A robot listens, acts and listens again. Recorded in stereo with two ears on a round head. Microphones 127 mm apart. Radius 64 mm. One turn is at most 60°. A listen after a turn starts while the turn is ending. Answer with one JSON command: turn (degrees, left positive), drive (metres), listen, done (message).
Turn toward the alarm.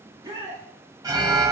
{"turn": -25}
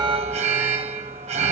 {"turn": -60}
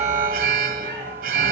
{"turn": -60}
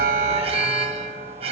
{"turn": -45}
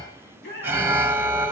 {"turn": -15}
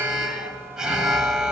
{"done": "Found it: an alarm, straight ahead, 1 to 2 m away."}